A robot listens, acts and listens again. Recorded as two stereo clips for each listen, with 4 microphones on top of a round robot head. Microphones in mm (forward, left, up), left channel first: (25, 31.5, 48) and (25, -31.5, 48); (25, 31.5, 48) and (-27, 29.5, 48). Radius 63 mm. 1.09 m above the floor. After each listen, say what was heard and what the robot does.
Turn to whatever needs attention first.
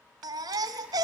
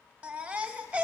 The baby crying: 110° right. Turn 110° right.
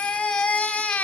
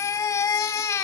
The baby crying is now 20° left. Turn 20° left.
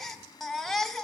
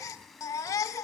Facing the baby crying.